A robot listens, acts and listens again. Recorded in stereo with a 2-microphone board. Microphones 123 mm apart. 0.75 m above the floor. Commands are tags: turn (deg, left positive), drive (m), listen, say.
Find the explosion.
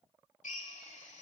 <listen/>
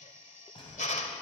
<turn deg="45"/>
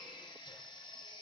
<listen/>
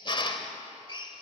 <say>I heard an explosion, but can't make it out now. It was about straight ahead or 90° left.</say>